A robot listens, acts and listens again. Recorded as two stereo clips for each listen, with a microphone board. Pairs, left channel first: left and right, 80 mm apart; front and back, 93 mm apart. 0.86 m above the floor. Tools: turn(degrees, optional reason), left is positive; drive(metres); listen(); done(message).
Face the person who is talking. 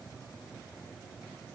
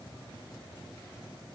listen()
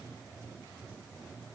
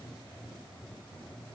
listen()
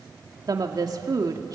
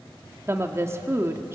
turn(degrees=-120, reason="The woman speaking: 120° right.")
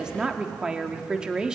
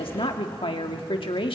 turn(degrees=-10, reason="The woman speaking is now 10° right.")
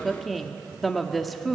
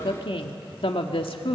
done("Facing the woman speaking, 1 to 2 m away.")